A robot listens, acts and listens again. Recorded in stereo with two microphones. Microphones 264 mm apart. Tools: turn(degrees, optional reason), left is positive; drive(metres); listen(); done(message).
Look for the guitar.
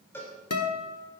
turn(degrees=70, reason="The guitar: about 70° left or 110° left.")
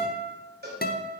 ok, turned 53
turn(degrees=40, reason="So it is at 40° left.")
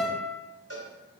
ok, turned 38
done("Facing the guitar.")